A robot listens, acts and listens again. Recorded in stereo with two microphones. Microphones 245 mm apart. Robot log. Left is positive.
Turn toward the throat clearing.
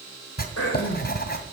cmd yaw +90
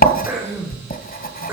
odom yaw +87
note: So it is at 10° right.
cmd yaw -10
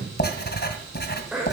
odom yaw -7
end: Found it: throat clearing, straight ahead.